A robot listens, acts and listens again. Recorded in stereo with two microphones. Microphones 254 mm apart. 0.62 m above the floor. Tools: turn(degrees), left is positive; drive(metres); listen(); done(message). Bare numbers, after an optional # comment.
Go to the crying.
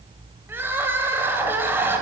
turn(-30)
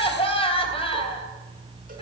# So it is at 25° left.
turn(25)
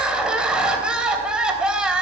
drive(1.0)
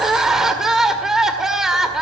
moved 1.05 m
drive(1.0)
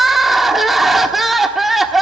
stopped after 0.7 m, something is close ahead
done("I am next to the crying.")